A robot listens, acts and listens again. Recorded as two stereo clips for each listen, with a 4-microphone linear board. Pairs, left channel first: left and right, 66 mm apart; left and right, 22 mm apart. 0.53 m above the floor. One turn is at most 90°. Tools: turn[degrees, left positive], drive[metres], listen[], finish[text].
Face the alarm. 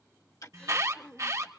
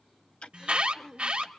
Thought: The alarm: about 55° right or 125° right.
Action: turn[-55]
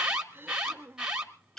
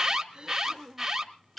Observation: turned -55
Thought: So it is at 10° right.
Action: turn[-10]
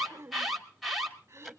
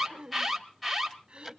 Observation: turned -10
Action: finish[Facing the alarm, 2 to 4 m away.]